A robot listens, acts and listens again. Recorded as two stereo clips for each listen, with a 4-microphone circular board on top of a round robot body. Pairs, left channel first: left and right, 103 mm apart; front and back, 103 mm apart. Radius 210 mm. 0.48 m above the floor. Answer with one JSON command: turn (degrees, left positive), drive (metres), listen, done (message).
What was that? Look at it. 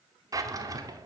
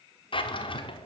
{"turn": -35}
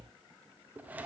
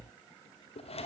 {"turn": -15}
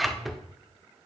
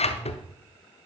{"done": "Facing the drawer."}